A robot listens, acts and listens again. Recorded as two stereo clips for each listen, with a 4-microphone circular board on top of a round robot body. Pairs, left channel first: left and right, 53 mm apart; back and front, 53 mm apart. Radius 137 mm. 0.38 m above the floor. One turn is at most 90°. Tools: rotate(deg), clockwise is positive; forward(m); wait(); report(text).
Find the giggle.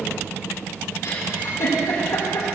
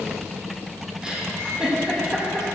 rotate(-70)
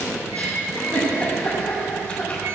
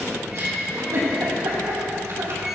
rotate(-25)
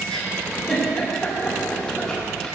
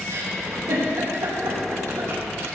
rotate(-10)
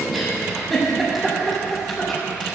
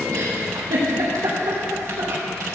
report("Found it: a giggle, straight ahead, over 4 m away.")